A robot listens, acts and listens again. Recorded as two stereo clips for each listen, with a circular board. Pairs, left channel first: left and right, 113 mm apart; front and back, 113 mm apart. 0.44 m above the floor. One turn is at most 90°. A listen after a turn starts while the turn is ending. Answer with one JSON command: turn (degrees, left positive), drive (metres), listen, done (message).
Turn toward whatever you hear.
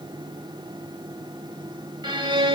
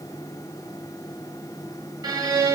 {"turn": -90}
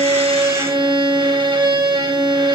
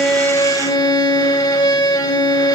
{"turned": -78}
{"turn": -55}
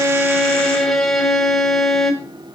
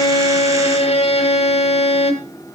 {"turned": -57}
{"done": "Facing the violin."}